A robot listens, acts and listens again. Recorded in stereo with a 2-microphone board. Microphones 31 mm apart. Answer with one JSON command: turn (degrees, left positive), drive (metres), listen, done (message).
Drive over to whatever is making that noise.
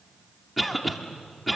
{"turn": 30}
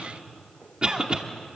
{"turn": -25}
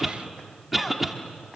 {"drive": 1.0}
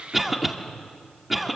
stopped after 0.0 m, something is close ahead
{"done": "Something is in my way. I am facing the cough but have not reached it."}